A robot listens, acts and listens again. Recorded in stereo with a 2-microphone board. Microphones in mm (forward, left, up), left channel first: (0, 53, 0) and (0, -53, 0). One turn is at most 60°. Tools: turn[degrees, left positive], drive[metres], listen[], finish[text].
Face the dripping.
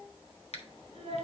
Action: listen[]
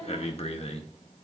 Action: listen[]
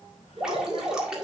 Action: turn[-30]
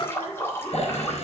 Thought: So it is at 25° left.
Action: turn[25]
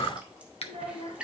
Thought: The dripping is now 10° right.
Action: turn[-10]
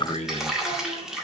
Action: finish[Found it: dripping, straight ahead.]